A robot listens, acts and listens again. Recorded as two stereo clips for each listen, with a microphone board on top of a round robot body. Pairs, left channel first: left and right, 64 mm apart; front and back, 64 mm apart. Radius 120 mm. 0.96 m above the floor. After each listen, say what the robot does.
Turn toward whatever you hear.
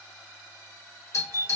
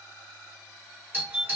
Turn 125° left.
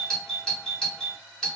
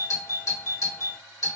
Turn 15° left.
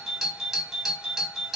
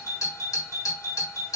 Facing the doorbell.